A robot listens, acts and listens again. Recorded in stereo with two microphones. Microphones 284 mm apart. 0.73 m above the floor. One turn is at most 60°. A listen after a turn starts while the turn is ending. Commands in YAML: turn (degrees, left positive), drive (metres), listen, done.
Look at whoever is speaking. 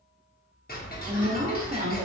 turn: -25
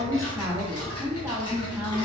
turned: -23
turn: -10
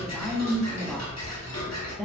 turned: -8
done: "Facing the woman speaking."